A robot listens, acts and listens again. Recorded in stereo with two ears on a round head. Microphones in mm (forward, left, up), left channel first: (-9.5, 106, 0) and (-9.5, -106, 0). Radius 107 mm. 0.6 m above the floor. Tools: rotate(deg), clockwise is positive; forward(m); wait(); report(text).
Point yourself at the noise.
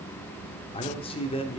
rotate(-25)
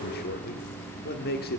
rotate(-130)
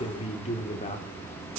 rotate(-30)
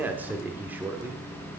rotate(10)
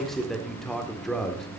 report("Facing the man speaking.")